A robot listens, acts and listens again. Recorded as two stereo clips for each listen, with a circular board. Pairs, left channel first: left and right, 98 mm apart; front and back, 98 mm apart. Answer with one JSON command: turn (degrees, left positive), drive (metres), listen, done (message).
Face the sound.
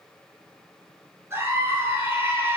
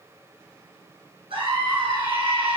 {"turn": -160}
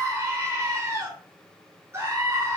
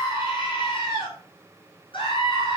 {"turn": -35}
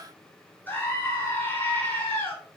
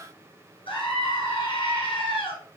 {"turn": 20}
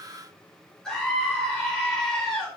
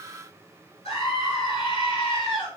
{"done": "Found it: a scream, straight ahead."}